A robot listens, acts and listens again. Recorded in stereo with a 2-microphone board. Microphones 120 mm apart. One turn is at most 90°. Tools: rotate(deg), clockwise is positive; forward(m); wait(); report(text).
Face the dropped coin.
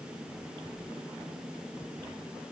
wait()
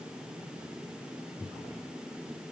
wait()
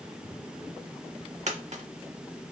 rotate(70)
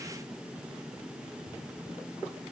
wait()
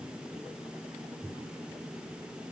report("I heard a dropped coin, but can't make it out now. It was about straight ahead or 40° right.")